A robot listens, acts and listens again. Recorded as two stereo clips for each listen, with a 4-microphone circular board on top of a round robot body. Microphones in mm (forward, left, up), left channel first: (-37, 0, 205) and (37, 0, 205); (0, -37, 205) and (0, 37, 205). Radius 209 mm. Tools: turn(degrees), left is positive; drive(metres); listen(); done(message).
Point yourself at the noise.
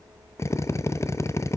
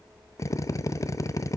turn(degrees=-130)
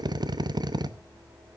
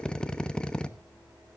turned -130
turn(degrees=-15)
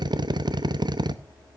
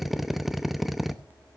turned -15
done("Facing the drill, under 1 m away.")